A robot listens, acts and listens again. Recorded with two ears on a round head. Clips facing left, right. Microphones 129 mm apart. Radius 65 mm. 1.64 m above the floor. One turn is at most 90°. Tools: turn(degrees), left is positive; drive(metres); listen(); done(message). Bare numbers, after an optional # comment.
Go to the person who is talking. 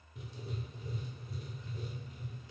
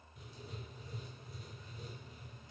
listen()
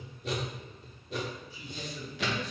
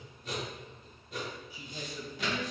turn(-30)
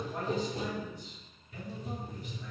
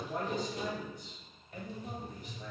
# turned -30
# So it is at 140° right.
turn(-90)
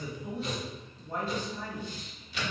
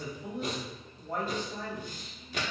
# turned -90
# The man speaking is now 60° right.
turn(-60)
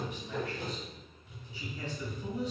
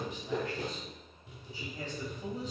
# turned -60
# The man speaking is now 35° right.
turn(-35)
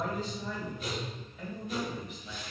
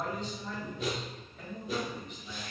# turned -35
drive(1.0)
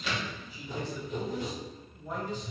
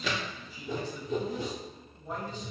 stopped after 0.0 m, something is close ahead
done("Blocked. The man speaking is further on, straight ahead.")